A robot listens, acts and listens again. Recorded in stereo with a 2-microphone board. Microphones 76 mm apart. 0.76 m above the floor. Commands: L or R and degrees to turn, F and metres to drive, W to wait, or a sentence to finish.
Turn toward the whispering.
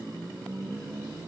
W
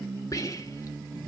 L45
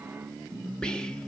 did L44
L15
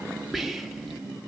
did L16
Facing the whispering, 1 to 2 m away.